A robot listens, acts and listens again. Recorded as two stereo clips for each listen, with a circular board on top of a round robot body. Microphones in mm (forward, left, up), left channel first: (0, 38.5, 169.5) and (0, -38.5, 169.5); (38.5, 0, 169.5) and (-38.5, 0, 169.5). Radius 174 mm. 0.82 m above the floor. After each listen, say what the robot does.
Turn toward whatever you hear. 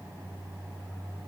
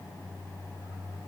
Keep listening.
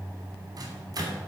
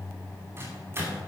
Turn 125° right.
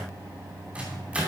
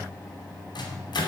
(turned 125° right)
Turn 15° right.
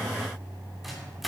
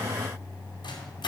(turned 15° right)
Found it: a microwave, straight ahead, 2 to 4 m away.